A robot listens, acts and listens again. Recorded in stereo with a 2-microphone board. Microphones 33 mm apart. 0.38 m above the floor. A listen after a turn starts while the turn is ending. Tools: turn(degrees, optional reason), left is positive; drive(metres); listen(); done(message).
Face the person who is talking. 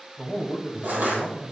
turn(degrees=-30, reason="The man speaking: about 30° right or 150° right.")
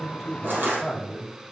done("Found it: a man speaking, straight ahead.")